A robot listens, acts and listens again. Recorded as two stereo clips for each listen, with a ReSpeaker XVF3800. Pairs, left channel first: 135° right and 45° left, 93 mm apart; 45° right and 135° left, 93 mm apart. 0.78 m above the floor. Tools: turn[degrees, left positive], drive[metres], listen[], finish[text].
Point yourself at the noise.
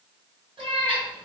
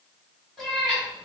Thought: The cat meowing: 45° left.
Action: turn[45]
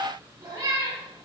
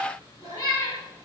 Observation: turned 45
Action: finish[Facing the cat meowing.]